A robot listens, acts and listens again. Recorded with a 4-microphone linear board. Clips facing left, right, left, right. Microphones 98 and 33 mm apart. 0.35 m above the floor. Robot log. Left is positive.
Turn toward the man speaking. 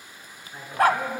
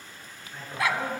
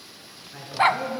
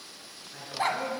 note: The man speaking: about 15° left or 165° left.
cmd yaw +15
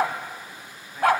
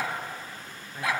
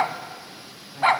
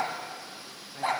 cmd idle
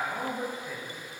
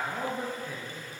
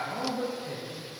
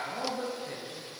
cmd yaw -30
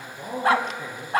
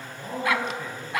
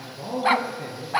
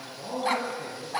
note: So it is at 15° left.
cmd yaw +15
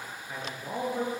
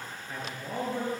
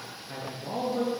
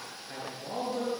end: Found it: a man speaking, straight ahead.